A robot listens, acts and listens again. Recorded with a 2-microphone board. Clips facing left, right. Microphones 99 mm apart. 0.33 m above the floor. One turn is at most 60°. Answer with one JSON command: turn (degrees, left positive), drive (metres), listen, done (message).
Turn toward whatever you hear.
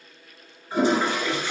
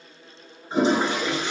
{"turn": -25}
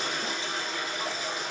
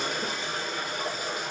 {"turn": -60}
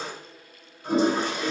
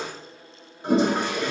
{"turn": -60}
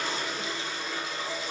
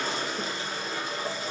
{"turn": -45}
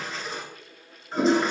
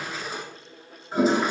{"done": "Facing the toilet flushing, under 1 m away."}